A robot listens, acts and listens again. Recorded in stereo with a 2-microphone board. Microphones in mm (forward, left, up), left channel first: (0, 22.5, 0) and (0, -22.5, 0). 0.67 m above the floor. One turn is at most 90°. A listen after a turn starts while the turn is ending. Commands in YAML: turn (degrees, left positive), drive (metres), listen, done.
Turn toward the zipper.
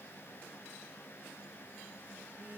listen: true
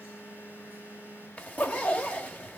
turn: 35
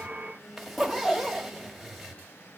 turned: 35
done: "Facing the zipper."